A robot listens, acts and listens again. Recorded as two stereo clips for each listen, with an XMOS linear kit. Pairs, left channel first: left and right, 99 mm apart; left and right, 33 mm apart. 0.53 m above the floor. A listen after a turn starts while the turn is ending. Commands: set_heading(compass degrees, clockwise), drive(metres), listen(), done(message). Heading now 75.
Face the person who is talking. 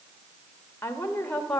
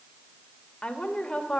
set_heading(60)
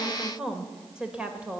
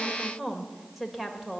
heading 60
set_heading(75)
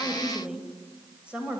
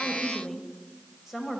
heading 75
set_heading(85)
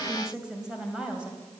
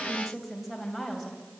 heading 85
set_heading(95)
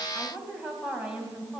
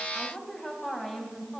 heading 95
set_heading(105)
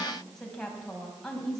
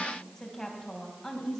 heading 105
done("Found it: a woman speaking, straight ahead, 2 to 4 m away.")